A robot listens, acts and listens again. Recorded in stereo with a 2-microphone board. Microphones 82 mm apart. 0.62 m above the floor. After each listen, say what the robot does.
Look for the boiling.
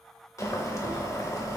Turn 40° left.
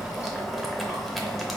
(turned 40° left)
Facing the boiling.